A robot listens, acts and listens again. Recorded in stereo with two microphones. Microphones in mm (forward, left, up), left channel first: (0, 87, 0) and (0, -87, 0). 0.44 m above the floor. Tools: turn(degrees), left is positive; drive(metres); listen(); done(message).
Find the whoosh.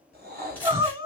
turn(degrees=-70)
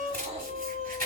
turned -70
listen()
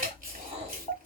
turn(degrees=-35)
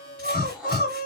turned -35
done("Facing the whoosh.")